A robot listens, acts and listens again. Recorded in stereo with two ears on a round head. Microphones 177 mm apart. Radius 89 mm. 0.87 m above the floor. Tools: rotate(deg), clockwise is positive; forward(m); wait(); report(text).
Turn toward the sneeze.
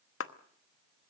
wait()
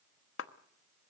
wait()
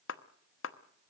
report("I can't make out a sneeze, only a clap.")